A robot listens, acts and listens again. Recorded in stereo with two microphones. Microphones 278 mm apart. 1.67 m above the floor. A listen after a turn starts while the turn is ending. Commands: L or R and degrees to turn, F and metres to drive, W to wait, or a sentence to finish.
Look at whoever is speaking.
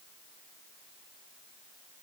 W
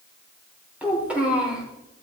R30
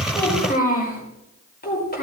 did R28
L35
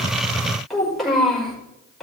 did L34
Facing the child speaking.